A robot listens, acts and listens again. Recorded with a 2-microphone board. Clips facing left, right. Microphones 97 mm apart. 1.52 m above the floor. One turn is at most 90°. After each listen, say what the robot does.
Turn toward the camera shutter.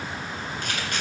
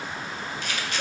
Turn 50° left.
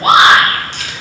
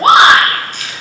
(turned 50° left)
Turn 75° left.
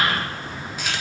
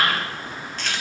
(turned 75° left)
Turn 10° left.
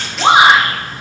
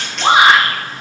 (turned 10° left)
Facing the camera shutter, 1 to 2 m away.